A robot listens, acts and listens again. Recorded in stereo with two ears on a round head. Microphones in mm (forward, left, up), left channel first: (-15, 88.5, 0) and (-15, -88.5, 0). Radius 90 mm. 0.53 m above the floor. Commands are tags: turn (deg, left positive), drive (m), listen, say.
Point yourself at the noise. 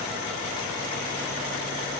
<listen/>
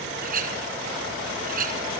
<turn deg="-45"/>
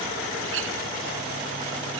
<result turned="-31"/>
<turn deg="-100"/>
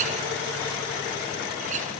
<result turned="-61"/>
<turn deg="-40"/>
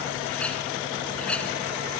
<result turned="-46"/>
<say>Found it: a clink, straight ahead, 2 to 4 m away.</say>